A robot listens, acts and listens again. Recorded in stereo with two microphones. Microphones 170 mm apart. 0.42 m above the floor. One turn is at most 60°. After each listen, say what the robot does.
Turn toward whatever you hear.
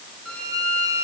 Turn 30° left.
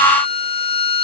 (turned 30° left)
Turn 60° left.
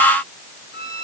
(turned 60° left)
Turn 60° left.
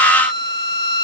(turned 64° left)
Turn 25° left.
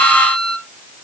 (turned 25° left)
Facing the violin.